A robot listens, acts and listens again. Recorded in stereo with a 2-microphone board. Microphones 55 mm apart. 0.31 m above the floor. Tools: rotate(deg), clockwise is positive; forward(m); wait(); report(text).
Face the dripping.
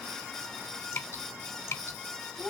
rotate(-55)
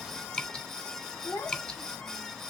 rotate(-20)
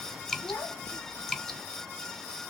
rotate(-10)
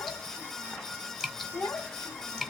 report("Facing the dripping.")